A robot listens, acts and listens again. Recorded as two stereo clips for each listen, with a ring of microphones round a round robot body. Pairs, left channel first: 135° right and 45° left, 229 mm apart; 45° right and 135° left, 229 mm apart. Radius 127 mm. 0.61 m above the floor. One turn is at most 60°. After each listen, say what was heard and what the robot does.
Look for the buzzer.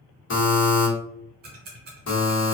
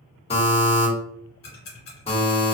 The buzzer: 110° right. Turn 60° right.
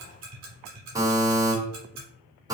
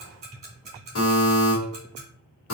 The buzzer is now 30° right. Turn 30° right.
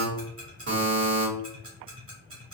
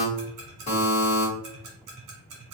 The buzzer is now 15° left. Turn 15° left.
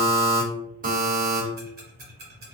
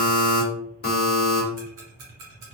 Found it: a buzzer, straight ahead, 1 to 2 m away.